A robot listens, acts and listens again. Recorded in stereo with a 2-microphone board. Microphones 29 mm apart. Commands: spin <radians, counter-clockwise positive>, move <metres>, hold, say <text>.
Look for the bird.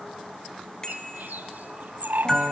spin -1.31
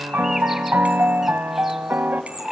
spin -0.17
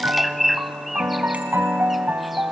say Found it: a bird, straight ahead.